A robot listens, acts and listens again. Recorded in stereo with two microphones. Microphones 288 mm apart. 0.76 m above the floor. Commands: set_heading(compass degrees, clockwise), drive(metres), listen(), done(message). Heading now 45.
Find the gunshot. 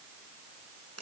listen()
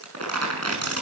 listen()
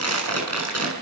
done("I can't make out a gunshot to turn to.")